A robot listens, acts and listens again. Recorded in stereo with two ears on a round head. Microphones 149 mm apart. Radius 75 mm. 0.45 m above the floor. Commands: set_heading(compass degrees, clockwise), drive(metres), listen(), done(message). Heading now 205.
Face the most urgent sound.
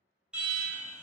set_heading(235)
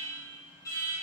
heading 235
set_heading(215)
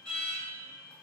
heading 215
done("Facing the alarm.")